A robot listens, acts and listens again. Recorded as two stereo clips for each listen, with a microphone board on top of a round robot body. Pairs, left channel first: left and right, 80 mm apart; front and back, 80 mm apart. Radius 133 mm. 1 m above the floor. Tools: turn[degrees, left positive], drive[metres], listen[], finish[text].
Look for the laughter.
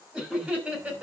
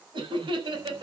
Thought: The laughter: 160° right.
Action: turn[-160]
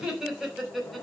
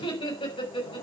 Action: finish[Found it: laughter, straight ahead, over 4 m away.]